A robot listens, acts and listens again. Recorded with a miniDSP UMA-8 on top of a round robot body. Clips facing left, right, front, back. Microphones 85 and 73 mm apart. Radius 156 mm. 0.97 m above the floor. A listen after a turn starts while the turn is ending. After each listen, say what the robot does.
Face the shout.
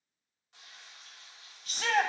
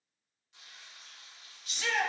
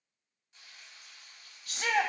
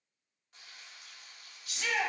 Turn 45° left.
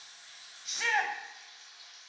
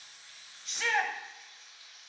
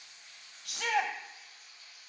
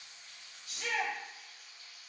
Facing the shout, 1 to 2 m away.